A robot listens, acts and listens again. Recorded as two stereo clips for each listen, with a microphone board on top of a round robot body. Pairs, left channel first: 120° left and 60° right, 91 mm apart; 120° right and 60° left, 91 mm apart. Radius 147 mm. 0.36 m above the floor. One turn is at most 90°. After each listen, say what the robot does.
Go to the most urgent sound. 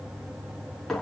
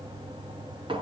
Keep listening.
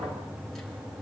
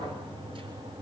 Keep listening.
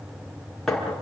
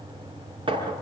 I can't make out anything urgent to turn to.